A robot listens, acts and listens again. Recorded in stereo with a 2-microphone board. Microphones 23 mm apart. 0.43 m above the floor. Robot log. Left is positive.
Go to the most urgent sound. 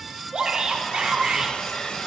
note: The shout: about 40° right or 140° right.
cmd yaw -40
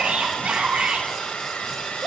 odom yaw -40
note: So it is at 100° right.
cmd yaw -100
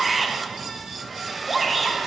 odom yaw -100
cmd fwd 1.0
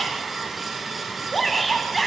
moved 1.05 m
cmd fwd 1.0
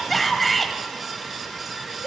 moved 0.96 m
cmd fwd 1.0
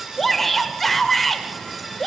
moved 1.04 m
note: The shout is now 15° left.
cmd yaw +15
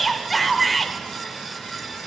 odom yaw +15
cmd fwd 1.0
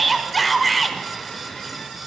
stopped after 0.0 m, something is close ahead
end: Arrived at the shout, straight ahead.